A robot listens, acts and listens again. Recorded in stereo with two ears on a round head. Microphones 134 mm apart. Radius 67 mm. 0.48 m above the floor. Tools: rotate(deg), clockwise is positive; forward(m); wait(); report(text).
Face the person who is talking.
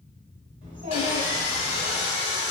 rotate(50)
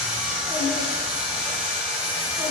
wait()
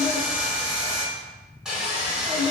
report("Facing the child speaking, 1 to 2 m away.")